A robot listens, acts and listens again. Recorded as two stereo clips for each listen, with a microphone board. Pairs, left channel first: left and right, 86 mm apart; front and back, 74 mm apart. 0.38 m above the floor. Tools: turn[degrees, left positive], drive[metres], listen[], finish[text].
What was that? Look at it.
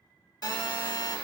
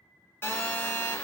Thought: The phone buzzing: 60° left.
Action: turn[60]
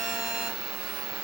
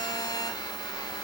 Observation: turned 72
Thought: The phone buzzing is now 15° right.
Action: turn[-15]
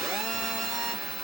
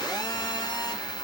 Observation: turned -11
Action: finish[Found it: a phone buzzing, straight ahead, 1 to 2 m away.]